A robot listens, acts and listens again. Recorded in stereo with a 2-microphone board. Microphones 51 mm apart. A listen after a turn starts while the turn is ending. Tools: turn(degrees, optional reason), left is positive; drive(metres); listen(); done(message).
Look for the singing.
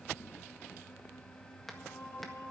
turn(degrees=90)
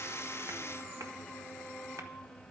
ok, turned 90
done("Found it: singing, straight ahead.")